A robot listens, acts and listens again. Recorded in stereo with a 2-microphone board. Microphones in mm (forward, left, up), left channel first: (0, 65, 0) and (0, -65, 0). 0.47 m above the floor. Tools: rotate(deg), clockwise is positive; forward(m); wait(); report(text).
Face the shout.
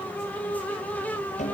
wait()
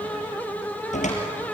wait()
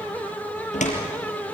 report("I can't make out a shout to turn to.")